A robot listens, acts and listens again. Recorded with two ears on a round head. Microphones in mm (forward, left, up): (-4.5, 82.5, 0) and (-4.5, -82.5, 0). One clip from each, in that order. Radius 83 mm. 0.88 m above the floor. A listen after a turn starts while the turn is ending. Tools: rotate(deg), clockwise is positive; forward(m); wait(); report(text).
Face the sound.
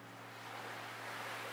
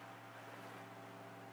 wait()
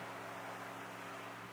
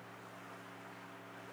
wait()
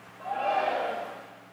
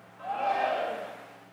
rotate(30)
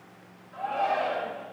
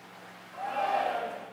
report("Facing the shout.")